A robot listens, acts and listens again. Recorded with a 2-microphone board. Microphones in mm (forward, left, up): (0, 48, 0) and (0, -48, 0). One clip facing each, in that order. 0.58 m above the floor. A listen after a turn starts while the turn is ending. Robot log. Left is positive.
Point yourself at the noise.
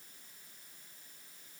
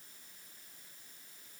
cmd idle
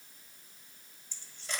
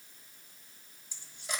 cmd yaw -30
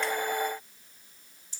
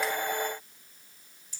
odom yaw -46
note: So it is at 35° left.
cmd yaw +35
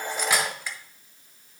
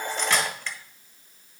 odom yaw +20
note: The cutlery clinking is now 15° left.
cmd yaw +15
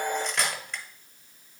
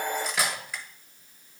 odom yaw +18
end: Facing the cutlery clinking, 1 to 2 m away.